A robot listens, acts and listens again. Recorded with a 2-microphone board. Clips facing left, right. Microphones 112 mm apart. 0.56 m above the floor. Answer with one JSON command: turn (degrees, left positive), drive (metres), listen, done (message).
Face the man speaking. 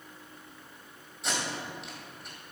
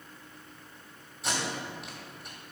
{"listen": true}
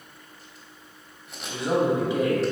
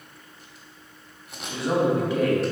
{"turn": 20}
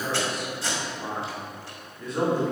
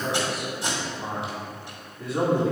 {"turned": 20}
{"done": "Found it: a man speaking, straight ahead."}